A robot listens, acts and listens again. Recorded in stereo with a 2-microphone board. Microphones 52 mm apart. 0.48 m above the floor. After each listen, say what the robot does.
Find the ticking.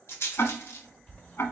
Turn 50° left.
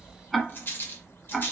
Found it: ticking, straight ahead.